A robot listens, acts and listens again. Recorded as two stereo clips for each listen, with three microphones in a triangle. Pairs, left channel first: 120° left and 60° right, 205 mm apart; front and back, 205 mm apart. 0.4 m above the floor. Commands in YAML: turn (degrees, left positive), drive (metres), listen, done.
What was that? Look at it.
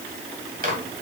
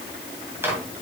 turn: -100
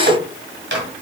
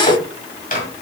turn: -45
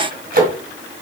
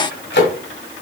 turn: -25
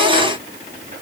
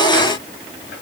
listen: true
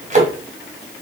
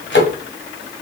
turn: -10
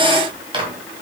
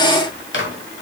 done: "Facing the microwave."